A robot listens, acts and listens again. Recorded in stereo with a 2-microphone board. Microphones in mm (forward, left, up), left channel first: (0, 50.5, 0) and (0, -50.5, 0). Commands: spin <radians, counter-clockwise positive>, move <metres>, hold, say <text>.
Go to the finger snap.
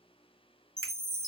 spin -0.96
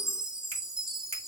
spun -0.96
spin -1.22
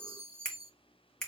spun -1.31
move 1.0
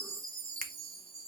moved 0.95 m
move 1.0
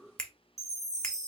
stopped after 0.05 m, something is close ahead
spin 0.17
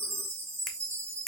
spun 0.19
say Arrived at the finger snap, straight ahead.